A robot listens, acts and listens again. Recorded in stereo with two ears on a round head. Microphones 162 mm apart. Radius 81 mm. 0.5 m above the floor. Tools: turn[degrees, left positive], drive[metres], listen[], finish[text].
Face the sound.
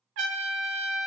Thought: The trumpet: about 75° right or 105° right.
Action: turn[-75]
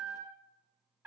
Thought: So it is at 10° right.
Action: turn[-10]
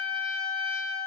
Action: finish[Facing the trumpet.]